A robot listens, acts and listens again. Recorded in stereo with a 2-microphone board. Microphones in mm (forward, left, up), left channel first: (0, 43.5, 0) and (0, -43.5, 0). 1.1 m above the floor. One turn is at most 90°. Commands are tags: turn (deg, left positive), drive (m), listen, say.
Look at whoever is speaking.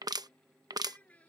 <turn deg="20"/>
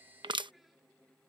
<listen/>
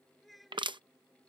<turn deg="30"/>
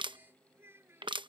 <turn deg="-25"/>
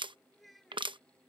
<say>Facing the child speaking.</say>